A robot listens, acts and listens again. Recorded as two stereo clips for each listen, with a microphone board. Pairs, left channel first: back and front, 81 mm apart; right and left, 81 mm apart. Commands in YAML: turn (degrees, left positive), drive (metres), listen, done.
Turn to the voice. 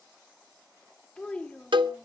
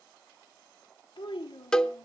turn: -100
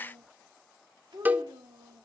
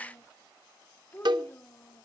turn: -25
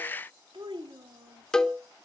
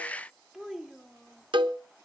done: "Found it: a child speaking, straight ahead."